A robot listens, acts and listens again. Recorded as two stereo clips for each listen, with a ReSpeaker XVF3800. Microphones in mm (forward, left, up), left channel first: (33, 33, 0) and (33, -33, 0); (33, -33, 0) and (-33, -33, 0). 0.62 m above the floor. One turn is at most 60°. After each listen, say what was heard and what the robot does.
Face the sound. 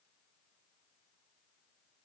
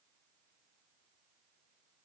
Keep listening.
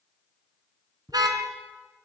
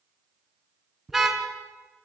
The car horn: 95° right. Turn 60° right.
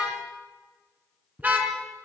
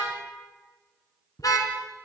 The car horn is now 25° right. Turn 25° right.
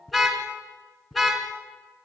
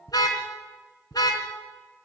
Found it: a car horn, straight ahead, 2 to 4 m away.